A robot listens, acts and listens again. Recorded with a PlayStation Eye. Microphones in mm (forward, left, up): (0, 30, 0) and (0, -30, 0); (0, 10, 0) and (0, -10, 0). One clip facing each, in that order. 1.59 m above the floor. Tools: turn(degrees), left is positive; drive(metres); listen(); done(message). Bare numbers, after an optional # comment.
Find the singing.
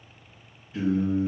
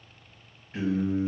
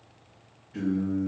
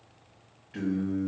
# The singing: about 60° right or 120° right.
turn(-60)
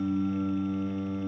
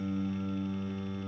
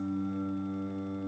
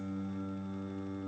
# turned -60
done("Found it: singing, straight ahead, 1 to 2 m away.")